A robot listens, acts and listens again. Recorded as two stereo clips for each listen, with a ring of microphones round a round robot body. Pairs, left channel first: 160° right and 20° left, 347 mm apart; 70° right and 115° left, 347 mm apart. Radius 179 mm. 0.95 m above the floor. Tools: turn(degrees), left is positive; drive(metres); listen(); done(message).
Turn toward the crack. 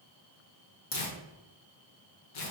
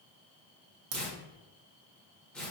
turn(degrees=140)
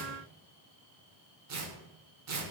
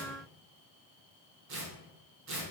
done("I heard a crack from this way, but can't make it out now.")